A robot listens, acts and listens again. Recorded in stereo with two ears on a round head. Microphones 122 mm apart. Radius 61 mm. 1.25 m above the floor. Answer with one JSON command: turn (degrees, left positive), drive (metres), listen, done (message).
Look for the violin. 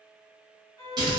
{"turn": -20}
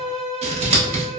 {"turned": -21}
{"done": "Found it: a violin, straight ahead."}